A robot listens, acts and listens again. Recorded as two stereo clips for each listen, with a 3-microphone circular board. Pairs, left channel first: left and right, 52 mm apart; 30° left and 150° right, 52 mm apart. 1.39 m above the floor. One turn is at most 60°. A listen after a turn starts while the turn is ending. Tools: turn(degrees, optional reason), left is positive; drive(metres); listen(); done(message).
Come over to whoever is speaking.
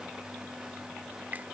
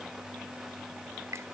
listen()
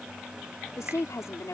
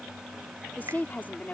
turn(degrees=60, reason="The woman speaking: 85° left.")
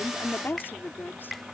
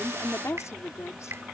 turn(degrees=45, reason="The woman speaking is now 45° left.")
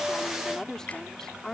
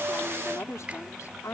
turn(degrees=10, reason="The woman speaking is now 10° left.")
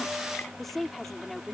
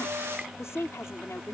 drive(metres=1.0)
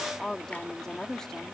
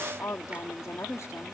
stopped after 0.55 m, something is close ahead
turn(degrees=10, reason="The woman speaking is now 10° left.")
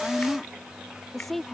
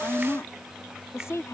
done("Something is in my way. I am facing the woman speaking but have not reached it.")